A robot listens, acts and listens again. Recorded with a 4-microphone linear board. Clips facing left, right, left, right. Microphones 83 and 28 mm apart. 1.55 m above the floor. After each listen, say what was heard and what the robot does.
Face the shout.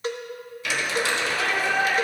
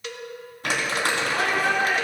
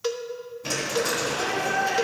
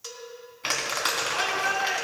The shout: about 55° right or 125° right. Turn 55° right.
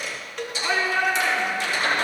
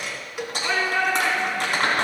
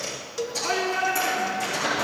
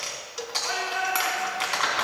Facing the shout, over 4 m away.